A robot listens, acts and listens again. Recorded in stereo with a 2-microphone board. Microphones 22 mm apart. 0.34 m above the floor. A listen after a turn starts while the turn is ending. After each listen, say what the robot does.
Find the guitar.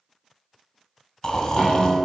Turn 30° left.
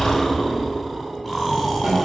Keep listening.
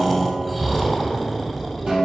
Turn 35° right.
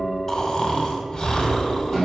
Keep listening.
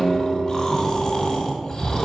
Facing the guitar.